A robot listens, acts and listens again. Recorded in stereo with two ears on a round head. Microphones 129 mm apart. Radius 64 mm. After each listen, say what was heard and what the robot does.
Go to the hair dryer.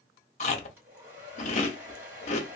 Turn 30° right.
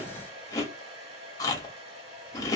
So it is at 135° right. Turn 135° right.
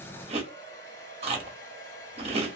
The hair dryer is now 20° left. Turn 20° left.
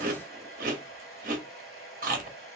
Drive 1.0 m forward.
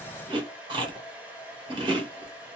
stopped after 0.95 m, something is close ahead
The hair dryer is now 10° right. Turn 10° right.
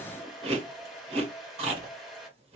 I am next to the hair dryer.